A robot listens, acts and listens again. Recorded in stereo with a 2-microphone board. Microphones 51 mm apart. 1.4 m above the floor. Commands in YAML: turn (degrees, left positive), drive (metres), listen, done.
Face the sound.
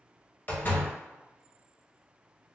turn: 35
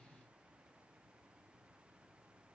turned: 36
listen: true
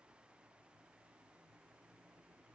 done: "I heard a door slam, but can't make it out now. It was about straight ahead or 110° left."